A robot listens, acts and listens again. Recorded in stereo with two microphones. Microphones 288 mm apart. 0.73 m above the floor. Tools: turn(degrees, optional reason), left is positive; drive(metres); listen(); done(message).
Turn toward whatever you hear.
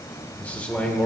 turn(degrees=30)
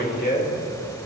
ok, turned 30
turn(degrees=145, reason="So it is at 145° left.")
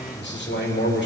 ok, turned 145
turn(degrees=40, reason="The man speaking is now 40° left.")
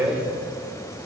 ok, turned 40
turn(degrees=-10, reason="The man speaking is now 10° right.")
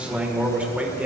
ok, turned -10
done("Facing the man speaking, 1 to 2 m away.")